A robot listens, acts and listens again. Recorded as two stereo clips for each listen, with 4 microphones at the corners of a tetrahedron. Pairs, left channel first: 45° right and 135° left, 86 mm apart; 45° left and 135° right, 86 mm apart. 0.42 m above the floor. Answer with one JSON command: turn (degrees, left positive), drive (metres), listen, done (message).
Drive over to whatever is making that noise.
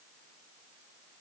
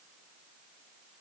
{"listen": true}
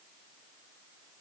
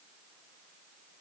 {"listen": true}
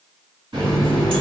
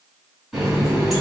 {"turn": 135}
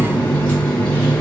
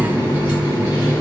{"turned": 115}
{"turn": 20}
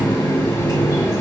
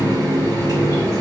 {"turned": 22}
{"drive": 1.0}
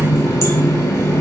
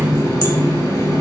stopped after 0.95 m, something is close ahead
{"done": "I am next to the running tap."}